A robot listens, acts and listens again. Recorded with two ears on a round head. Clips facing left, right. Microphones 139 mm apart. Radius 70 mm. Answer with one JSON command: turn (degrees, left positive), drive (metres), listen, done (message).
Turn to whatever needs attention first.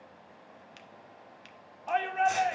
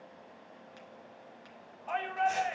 {"turn": 50}
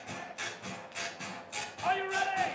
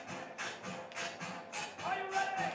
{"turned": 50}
{"turn": 80}
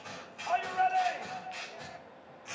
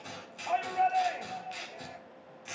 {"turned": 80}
{"turn": -15}
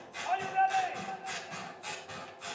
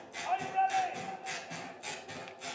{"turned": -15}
{"done": "Facing the shout, 2 to 4 m away."}